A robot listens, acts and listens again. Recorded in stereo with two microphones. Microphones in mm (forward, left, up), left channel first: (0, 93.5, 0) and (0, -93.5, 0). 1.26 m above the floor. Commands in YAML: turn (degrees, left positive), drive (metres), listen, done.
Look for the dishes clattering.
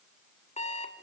listen: true
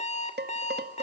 turn: -65
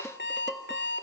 done: "Facing the dishes clattering."